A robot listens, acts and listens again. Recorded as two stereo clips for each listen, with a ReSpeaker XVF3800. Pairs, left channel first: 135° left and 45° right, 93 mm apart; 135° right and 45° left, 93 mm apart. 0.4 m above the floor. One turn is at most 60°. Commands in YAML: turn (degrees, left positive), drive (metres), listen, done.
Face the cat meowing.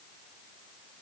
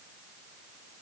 listen: true
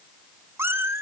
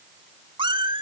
turn: 20
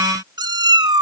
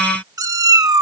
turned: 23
done: "Found it: a cat meowing, straight ahead."